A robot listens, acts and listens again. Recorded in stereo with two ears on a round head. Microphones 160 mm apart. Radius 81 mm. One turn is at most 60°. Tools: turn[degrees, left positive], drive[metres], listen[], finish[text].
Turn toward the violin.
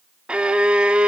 Action: turn[-30]
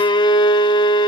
Thought: So it is at 25° left.
Action: turn[25]
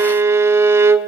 Thought: The violin is now 15° right.
Action: turn[-15]
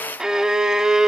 Action: finish[Found it: a violin, straight ahead, 1 to 2 m away.]